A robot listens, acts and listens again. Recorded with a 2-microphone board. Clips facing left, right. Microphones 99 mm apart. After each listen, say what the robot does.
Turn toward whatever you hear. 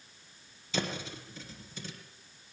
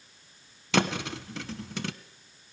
Turn 90° right.
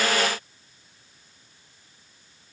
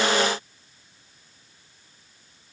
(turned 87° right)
I heard a thud from this way, but can't make it out now.